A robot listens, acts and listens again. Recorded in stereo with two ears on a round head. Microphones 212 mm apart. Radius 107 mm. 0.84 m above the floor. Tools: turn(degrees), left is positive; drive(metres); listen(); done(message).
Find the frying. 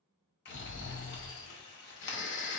turn(degrees=45)
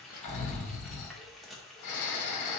done("Found it: frying, straight ahead.")